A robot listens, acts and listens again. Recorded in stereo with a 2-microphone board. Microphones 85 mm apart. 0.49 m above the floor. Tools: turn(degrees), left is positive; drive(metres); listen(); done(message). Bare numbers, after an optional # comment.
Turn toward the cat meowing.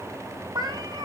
# The cat meowing: about 60° right or 120° right.
turn(-60)
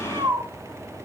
# So it is at 50° right.
turn(-50)
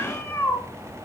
# The cat meowing is now 25° left.
turn(25)
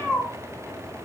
done("Found it: a cat meowing, straight ahead, 2 to 4 m away.")